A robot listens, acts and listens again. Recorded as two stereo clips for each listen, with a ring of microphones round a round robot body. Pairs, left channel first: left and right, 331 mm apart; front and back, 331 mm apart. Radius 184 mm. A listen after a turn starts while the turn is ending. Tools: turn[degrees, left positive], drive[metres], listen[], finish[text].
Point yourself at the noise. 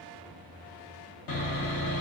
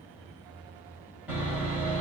Thought: The sawing: 95° left.
Action: turn[95]
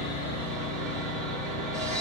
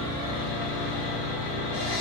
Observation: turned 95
Action: finish[Found it: sawing, straight ahead.]